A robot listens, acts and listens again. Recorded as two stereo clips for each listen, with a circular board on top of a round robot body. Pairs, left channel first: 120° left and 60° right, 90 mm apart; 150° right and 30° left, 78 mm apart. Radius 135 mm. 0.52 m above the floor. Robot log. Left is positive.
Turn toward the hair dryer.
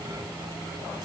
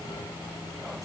cmd idle
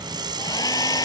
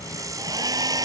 note: The hair dryer: 70° left.
cmd yaw +70
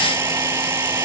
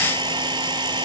end: Facing the hair dryer.